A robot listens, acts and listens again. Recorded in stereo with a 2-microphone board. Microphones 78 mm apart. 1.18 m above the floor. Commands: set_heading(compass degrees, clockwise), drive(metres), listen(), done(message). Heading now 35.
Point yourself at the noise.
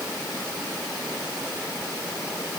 listen()
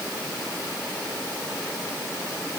listen()
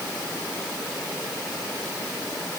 done("I can't make out anything to turn to.")